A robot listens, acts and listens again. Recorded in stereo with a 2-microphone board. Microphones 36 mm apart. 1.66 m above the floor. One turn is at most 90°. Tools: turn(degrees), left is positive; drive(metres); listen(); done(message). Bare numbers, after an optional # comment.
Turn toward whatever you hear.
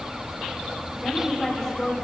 turn(30)
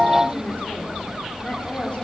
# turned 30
# So it is at 150° left.
turn(90)
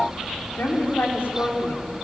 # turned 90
# The woman speaking is now 80° left.
turn(80)
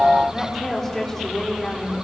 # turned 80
# The woman speaking is now 15° left.
turn(15)
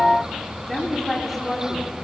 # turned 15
done("Found it: a woman speaking, straight ahead, over 4 m away.")